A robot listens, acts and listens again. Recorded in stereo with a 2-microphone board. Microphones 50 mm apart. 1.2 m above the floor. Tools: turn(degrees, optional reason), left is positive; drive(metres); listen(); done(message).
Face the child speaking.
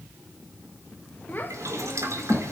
turn(degrees=55, reason="The child speaking: about 55° left or 125° left.")
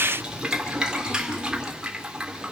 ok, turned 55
listen()
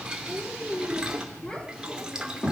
turn(degrees=25, reason="So it is at 25° left.")
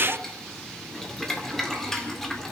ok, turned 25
listen()
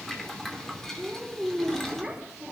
done("Found it: a child speaking, straight ahead, 2 to 4 m away.")